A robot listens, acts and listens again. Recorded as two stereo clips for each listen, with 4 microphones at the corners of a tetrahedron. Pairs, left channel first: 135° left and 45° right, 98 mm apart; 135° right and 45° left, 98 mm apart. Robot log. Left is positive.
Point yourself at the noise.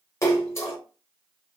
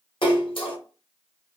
note: The splash: 165° right.
cmd yaw -165
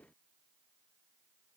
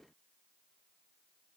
end: I heard a splash from this way, but can't make it out now.